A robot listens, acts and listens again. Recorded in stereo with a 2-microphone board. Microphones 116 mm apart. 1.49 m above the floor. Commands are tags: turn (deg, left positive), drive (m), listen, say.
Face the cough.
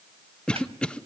<turn deg="30"/>
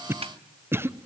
<turn deg="-20"/>
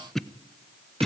<say>Facing the cough.</say>